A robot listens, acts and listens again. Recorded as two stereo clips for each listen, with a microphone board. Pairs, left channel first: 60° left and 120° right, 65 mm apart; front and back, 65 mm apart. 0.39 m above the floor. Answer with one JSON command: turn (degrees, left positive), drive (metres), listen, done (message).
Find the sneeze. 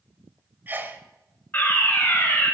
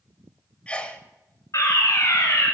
{"turn": -70}
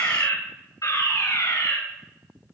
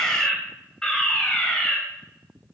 {"done": "Facing where the sneeze came from. I can't hear it now."}